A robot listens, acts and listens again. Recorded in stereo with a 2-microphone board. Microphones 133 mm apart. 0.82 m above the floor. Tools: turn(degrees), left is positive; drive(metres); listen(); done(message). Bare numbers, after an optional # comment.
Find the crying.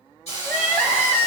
turn(30)
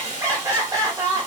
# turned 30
# So it is at 25° right.
turn(-25)
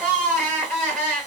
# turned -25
done("Found it: crying, straight ahead, 1 to 2 m away.")